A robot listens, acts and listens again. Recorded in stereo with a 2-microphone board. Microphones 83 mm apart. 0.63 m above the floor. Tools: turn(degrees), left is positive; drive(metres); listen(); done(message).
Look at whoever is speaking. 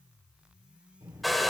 turn(degrees=-40)
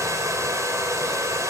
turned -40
listen()
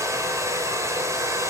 listen()
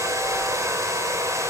done("I heard a child speaking, but can't make it out now. It was about straight ahead or 100° right.")